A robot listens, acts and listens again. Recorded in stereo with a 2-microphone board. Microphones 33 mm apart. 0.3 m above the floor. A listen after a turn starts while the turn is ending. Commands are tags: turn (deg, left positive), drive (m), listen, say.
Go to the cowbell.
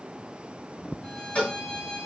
<turn deg="35"/>
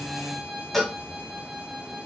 <drive m="1.0"/>
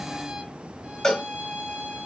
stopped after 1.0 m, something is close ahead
<turn deg="15"/>
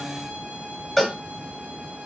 <say>Arrived at the cowbell, straight ahead.</say>